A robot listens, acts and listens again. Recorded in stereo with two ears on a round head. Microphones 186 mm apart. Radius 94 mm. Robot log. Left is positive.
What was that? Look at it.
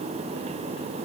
cmd idle
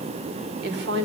note: The woman speaking: about 55° right or 125° right.
cmd yaw -55
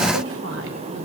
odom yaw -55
cmd idle
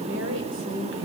note: So it is at 60° right.
cmd yaw -60
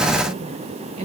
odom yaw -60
note: The woman speaking is now 30° right.
cmd yaw -30
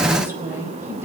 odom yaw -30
note: The woman speaking is now 10° right.
cmd yaw -10
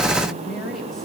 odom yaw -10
end: Facing the woman speaking, over 4 m away.